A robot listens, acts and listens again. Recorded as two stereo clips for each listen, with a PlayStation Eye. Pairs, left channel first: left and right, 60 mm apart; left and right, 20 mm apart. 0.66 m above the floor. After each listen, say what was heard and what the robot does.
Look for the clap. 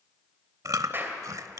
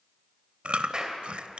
The clap: about 40° right or 140° right. Turn 40° right.
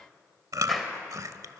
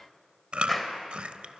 Facing the clap, 2 to 4 m away.